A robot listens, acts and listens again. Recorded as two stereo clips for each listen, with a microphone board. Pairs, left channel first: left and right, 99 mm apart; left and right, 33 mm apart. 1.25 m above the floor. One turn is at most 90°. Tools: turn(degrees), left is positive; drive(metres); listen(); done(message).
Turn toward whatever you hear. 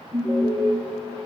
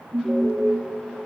turn(degrees=-40)
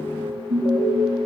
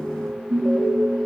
turn(degrees=-90)
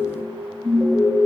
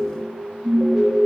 turn(degrees=-10)
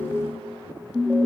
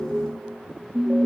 done("Facing the alarm, 2 to 4 m away.")